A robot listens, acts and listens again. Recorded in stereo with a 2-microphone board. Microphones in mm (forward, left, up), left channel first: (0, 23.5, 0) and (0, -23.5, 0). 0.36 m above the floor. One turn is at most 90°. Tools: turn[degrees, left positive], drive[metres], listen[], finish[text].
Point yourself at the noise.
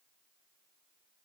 Action: listen[]
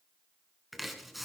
Action: turn[-30]
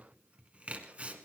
Thought: So it is at 150° right.
Action: turn[-90]
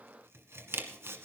Thought: The chopping is now 70° right.
Action: turn[-70]
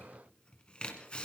Thought: The chopping is now 25° left.
Action: turn[25]
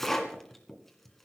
Thought: The chopping is now 10° left.
Action: turn[10]
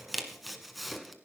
Action: finish[Found it: chopping, straight ahead.]